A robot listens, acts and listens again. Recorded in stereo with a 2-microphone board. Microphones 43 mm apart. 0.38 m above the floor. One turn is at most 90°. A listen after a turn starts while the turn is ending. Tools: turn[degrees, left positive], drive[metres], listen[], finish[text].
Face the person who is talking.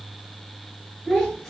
Thought: The child speaking: about 15° left or 165° left.
Action: turn[15]
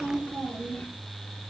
Thought: So it is at 150° left.
Action: turn[90]
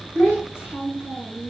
Thought: The child speaking is now 65° left.
Action: turn[65]
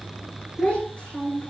Thought: The child speaking is now 20° left.
Action: turn[20]
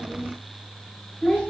Action: finish[Facing the child speaking, 2 to 4 m away.]